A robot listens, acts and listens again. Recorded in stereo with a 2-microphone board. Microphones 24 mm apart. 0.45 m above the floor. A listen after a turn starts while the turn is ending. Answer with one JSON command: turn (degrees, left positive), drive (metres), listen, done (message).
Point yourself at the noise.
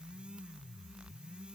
{"listen": true}
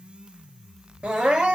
{"turn": -70}
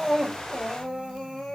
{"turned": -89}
{"turn": 20}
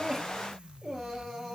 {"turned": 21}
{"done": "Facing the crying, over 4 m away."}